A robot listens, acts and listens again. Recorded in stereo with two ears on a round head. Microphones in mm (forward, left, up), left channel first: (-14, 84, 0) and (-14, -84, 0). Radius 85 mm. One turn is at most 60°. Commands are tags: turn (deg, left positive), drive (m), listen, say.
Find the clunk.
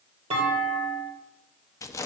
<turn deg="-35"/>
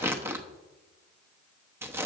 <listen/>
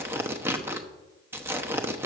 <say>I heard a clunk, but can't make it out now. It was about straight ahead or 110° right.</say>